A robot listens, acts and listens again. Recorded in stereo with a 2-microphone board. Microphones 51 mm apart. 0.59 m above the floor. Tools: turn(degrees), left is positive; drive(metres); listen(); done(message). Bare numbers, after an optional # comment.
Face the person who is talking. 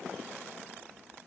listen()
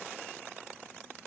listen()
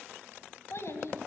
# The child speaking: about 60° left or 120° left.
turn(60)
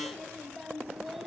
done("Found it: a child speaking, straight ahead.")